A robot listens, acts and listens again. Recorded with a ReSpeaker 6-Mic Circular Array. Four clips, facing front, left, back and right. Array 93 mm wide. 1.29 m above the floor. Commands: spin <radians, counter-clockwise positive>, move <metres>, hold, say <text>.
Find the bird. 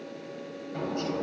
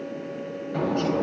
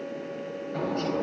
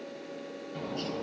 spin 1.83
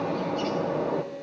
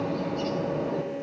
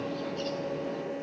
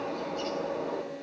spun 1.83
say Facing the bird, 1 to 2 m away.